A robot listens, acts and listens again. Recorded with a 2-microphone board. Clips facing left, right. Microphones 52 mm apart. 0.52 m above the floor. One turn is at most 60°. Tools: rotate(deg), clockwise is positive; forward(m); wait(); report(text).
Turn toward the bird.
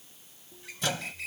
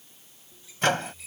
rotate(-60)
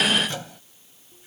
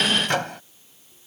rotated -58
wait()
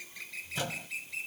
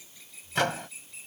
rotate(-60)
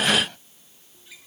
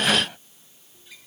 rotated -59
report("Facing the bird.")